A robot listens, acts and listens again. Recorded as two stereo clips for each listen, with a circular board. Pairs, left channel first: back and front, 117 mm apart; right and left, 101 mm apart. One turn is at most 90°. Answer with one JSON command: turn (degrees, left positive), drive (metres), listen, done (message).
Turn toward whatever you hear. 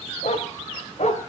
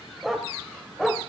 {"turn": 90}
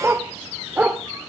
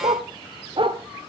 {"turn": 80}
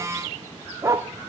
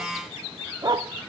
{"turn": 60}
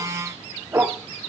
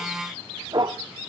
{"turn": 70}
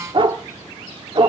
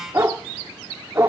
{"turn": 30}
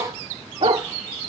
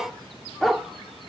{"done": "Found it: a dog barking, straight ahead."}